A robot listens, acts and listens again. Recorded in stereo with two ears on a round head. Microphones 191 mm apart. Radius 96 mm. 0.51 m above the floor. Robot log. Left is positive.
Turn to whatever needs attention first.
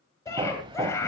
cmd yaw +30
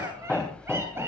cmd idle
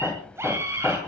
note: So it is at 15° right.
cmd yaw -15
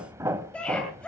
end: Found it: a scream, straight ahead.